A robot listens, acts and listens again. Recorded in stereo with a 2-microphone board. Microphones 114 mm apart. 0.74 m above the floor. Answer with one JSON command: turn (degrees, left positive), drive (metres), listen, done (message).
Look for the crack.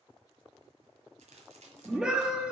{"turn": -90}
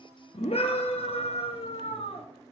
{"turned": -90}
{"done": "I heard a crack from this way, but can't make it out now."}